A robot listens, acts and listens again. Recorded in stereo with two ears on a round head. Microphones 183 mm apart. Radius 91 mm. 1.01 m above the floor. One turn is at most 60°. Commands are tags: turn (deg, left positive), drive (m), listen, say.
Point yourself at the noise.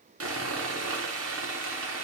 <turn deg="-60"/>
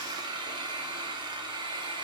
<turn deg="-25"/>
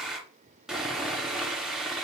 <say>Found it: sawing, straight ahead.</say>